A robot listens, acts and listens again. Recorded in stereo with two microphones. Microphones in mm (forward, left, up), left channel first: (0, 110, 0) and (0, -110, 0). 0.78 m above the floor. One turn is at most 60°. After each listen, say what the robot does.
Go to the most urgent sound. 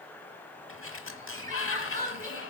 Turn 35° right.
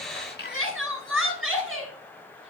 Turn 60° right.
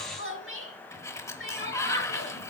Turn 60° right.
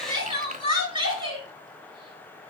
Turn 20° right.
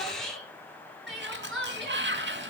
Drive 1.0 m forward.
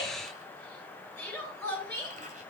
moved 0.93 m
Drive 1.0 m forward.
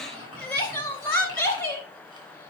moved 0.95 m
Turn 10° left.
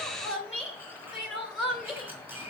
Drive 1.0 m forward.
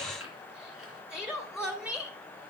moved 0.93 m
Drive 1.0 m forward.
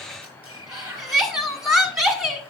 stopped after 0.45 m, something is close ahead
Arrived at the crying, straight ahead.